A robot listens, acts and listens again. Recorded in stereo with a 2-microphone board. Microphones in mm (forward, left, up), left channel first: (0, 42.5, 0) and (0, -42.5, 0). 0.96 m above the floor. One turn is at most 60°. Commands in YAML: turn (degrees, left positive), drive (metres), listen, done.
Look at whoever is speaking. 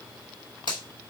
listen: true
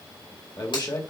turn: 55
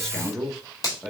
done: "Facing the man speaking."